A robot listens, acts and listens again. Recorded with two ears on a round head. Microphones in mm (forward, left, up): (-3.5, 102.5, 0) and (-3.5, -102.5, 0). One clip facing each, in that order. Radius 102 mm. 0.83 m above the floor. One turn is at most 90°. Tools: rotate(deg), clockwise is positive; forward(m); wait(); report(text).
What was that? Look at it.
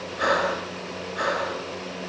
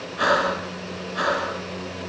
rotate(65)
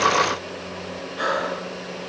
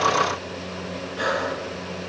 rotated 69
report("Facing the breathing.")